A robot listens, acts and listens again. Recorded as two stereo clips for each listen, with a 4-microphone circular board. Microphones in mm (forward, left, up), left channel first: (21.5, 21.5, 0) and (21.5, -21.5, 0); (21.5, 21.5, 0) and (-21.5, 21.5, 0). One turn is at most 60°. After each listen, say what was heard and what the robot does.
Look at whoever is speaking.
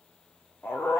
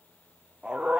Keep listening.
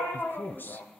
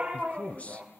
The man speaking: 55° left. Turn 55° left.
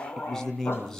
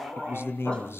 The man speaking is now 15° left. Turn 15° left.
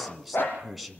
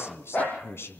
Found it: a man speaking, straight ahead.